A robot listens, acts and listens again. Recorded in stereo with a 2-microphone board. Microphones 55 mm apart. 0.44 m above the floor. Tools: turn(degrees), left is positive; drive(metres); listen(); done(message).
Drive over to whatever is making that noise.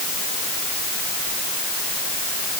listen()
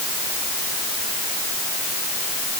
listen()
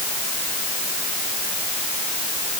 done("I can't make out anything to turn to.")